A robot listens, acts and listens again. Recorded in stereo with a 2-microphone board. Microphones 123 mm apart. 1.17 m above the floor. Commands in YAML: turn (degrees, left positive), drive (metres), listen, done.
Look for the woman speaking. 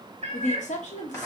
turn: 90
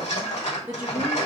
turn: -15
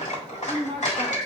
done: "Facing the woman speaking."